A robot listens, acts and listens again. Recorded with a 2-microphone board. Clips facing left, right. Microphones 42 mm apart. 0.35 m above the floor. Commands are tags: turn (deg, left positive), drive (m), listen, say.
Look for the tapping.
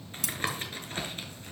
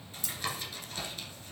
<turn deg="40"/>
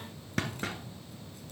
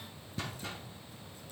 <turn deg="100"/>
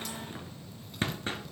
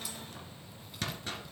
<turn deg="30"/>
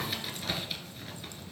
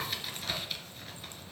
<say>Found it: tapping, straight ahead, 1 to 2 m away.</say>